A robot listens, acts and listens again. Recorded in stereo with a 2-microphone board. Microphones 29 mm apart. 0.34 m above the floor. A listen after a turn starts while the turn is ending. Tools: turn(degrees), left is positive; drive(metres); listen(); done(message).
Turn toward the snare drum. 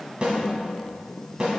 turn(degrees=-35)
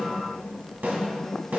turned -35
turn(degrees=-105)
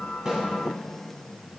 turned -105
listen()
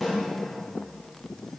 done("Facing the snare drum, 2 to 4 m away.")